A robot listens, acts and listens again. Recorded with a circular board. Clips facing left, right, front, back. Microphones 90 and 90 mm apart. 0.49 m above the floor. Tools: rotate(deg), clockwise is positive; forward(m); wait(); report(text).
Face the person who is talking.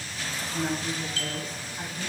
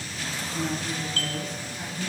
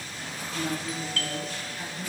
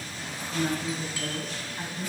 rotate(-130)
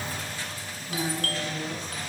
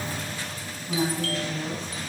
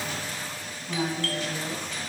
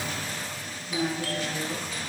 rotate(30)
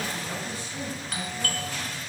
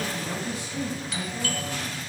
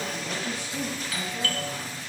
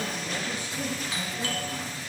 rotate(15)
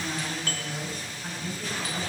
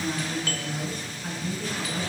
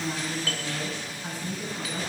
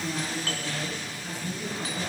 report("Facing the woman speaking, over 4 m away.")